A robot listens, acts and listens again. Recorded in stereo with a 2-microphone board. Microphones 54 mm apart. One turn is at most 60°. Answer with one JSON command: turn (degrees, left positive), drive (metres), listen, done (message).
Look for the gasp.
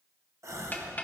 {"turn": -60}
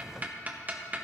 {"listen": true}
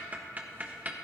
{"done": "I heard a gasp, but can't make it out now. It was about straight ahead or 60° right."}